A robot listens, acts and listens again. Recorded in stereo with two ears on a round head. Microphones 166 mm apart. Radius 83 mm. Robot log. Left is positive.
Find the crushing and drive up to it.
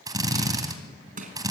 note: The crushing: about 45° right or 135° right.
cmd yaw -45
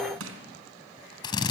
note: So it is at 90° right.
cmd yaw -90
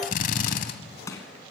note: The crushing is now 15° left.
cmd yaw +15
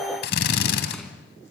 cmd idle
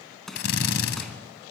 cmd fwd 1.0
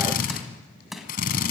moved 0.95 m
cmd fwd 1.0
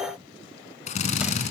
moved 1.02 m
cmd idle
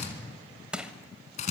cmd fwd 1.0
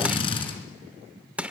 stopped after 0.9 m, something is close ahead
end: I am next to the crushing.